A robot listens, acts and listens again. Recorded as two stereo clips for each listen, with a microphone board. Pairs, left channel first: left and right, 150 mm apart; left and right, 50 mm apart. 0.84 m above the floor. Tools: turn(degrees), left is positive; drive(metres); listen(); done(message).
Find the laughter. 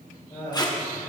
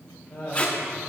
turn(degrees=35)
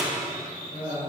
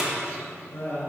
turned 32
turn(degrees=125)
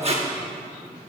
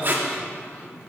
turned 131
listen()
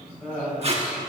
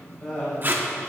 turn(degrees=10)
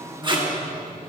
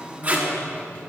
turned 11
listen()
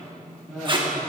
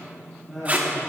done("Found it: laughter, straight ahead.")